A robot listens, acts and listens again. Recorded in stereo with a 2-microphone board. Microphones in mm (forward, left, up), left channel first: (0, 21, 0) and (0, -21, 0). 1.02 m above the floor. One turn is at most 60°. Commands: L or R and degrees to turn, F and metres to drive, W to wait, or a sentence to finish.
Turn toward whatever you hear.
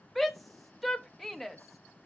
L30
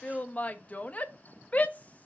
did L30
L60
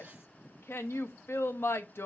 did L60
L60
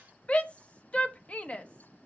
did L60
L30
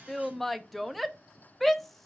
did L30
Facing the shout, under 1 m away.